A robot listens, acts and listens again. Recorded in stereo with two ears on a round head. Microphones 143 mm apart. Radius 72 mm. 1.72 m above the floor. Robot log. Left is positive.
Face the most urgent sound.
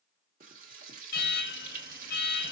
note: The alarm: about 60° left or 120° left.
cmd yaw +60
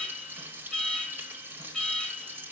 end: Found it: an alarm, straight ahead.